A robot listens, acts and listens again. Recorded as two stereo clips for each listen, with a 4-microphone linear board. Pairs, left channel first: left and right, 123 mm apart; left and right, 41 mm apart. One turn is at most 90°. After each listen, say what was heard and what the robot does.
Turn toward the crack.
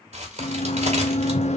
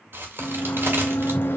The crack: about 65° right or 115° right. Turn 65° right.
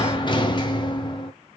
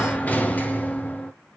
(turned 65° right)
Keep listening.
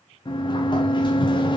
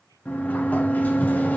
I heard a crack, but can't make it out now. It was about straight ahead or 50° right.